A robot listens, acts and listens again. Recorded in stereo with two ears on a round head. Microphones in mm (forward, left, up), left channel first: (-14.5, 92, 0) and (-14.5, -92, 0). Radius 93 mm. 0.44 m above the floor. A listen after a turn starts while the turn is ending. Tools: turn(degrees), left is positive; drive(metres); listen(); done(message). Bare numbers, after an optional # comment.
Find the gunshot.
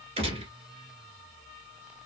# The gunshot: about 30° right or 150° right.
turn(-30)
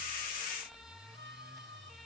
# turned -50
listen()
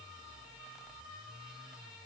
done("I heard a gunshot, but can't make it out now. It was about 20° left or 100° right.")